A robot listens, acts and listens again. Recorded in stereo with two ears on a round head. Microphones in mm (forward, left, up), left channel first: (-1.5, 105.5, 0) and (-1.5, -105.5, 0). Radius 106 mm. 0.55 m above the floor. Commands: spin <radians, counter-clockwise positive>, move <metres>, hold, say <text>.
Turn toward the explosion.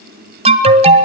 hold
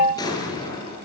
spin 0.26
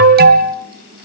hold
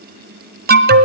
say I heard an explosion, but can't make it out now. It was about straight ahead or 150° left.